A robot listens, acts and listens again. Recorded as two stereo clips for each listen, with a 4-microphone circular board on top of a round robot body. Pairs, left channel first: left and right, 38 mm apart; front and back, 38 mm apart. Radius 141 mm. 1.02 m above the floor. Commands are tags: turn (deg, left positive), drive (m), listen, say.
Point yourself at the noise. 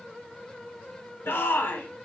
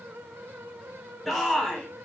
<turn deg="90"/>
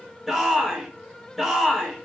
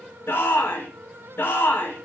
<say>Facing the shout, 1 to 2 m away.</say>